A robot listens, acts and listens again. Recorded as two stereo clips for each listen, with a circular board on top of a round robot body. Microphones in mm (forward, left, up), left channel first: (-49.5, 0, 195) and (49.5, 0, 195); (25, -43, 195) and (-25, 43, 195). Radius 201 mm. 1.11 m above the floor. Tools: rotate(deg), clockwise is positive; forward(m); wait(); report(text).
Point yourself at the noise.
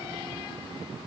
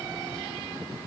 wait()
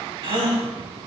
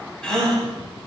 rotate(-20)
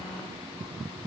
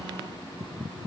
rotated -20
report("I heard a gasp from this way, but can't make it out now.")